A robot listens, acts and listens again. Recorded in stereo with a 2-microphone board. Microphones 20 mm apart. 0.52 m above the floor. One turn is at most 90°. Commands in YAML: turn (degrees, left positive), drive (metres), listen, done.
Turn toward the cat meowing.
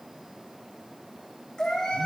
turn: 65
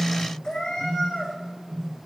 turn: 40
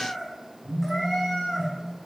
done: "Found it: a cat meowing, straight ahead, over 4 m away."